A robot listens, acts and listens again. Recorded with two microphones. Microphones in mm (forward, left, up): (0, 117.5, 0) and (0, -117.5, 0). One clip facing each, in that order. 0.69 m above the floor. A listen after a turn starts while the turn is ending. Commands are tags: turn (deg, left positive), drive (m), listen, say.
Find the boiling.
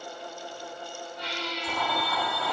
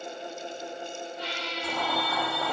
<turn deg="-35"/>
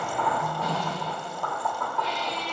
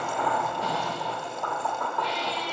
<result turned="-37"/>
<say>Found it: boiling, straight ahead, under 1 m away.</say>